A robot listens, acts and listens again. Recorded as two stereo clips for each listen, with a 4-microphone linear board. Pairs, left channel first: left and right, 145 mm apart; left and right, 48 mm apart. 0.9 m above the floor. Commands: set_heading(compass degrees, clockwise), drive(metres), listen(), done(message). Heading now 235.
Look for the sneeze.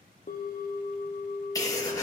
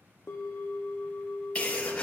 set_heading(210)
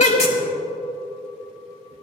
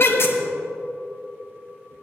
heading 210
set_heading(80)
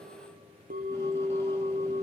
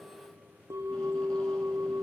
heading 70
set_heading(80)
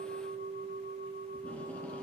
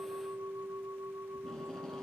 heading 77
done("I heard a sneeze from this way, but can't make it out now.")